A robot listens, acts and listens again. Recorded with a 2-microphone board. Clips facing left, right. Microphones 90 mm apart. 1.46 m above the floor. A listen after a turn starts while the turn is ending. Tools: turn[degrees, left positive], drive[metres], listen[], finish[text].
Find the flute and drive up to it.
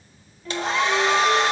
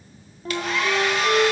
Thought: The flute: about 35° right or 145° right.
Action: turn[-35]
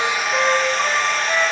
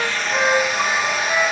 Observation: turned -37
Action: drive[1.0]
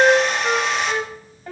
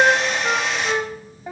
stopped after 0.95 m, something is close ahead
Thought: The flute is now 15° right.
Action: turn[-15]
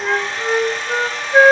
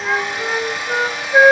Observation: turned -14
Action: finish[Arrived at the flute, straight ahead.]